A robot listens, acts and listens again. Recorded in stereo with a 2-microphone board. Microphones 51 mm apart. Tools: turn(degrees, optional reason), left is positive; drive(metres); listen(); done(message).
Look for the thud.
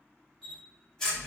listen()
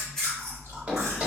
turn(degrees=-20, reason="The thud: about 20° right or 160° right.")
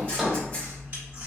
done("Facing the thud, 1 to 2 m away.")